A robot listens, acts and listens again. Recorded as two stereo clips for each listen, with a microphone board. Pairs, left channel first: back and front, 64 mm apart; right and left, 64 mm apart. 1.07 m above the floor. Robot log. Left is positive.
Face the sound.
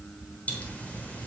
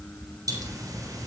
note: The pop: 110° left.
cmd yaw +110
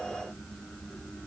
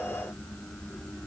end: I heard a pop from this way, but can't make it out now.